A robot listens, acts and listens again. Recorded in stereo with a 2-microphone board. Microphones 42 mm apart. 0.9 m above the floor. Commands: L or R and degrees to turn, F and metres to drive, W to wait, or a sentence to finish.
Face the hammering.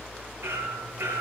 R90
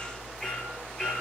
L15
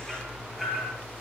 Found it: hammering, straight ahead, over 4 m away.